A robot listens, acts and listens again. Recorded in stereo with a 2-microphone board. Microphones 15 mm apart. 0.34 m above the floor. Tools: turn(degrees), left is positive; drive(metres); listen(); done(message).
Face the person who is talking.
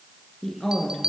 turn(degrees=35)
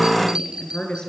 turn(degrees=105)
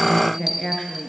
turn(degrees=25)
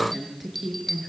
done("Facing the woman speaking.")